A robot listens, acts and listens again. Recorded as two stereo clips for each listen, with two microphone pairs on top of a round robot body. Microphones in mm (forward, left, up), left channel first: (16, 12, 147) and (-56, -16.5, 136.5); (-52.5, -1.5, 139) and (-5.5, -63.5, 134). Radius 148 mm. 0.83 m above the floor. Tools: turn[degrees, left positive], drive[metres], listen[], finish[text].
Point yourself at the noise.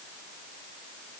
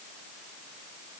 Action: listen[]
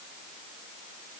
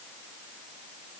Action: listen[]
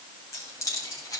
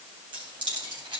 Thought: The keys jangling: 25° right.
Action: turn[-25]
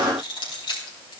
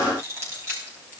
Thought: The keys jangling is now 10° left.
Action: turn[10]
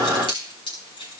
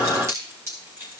Action: finish[Found it: keys jangling, straight ahead, over 4 m away.]